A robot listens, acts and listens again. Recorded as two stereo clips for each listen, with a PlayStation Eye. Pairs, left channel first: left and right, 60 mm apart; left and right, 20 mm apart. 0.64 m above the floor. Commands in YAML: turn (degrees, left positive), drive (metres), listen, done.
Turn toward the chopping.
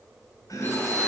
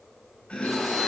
turn: 75
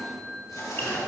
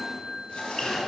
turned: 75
listen: true
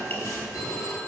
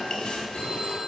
turn: 30
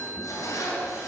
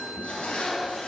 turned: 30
listen: true
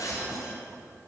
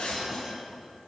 listen: true
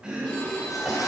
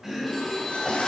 turn: -15
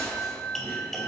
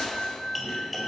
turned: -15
done: "Facing the chopping."